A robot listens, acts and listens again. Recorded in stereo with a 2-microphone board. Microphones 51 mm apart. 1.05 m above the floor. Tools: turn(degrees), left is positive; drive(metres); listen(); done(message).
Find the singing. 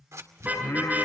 turn(degrees=90)
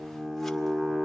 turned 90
done("Facing the singing.")